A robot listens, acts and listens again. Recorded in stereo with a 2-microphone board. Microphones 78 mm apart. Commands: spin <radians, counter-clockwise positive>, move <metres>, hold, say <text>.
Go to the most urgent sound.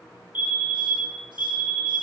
spin -0.44
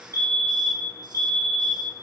spin -2.18
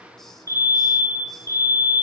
spin -0.96
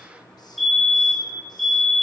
move 1.0
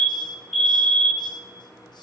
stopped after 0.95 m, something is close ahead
say I am next to the fire alarm.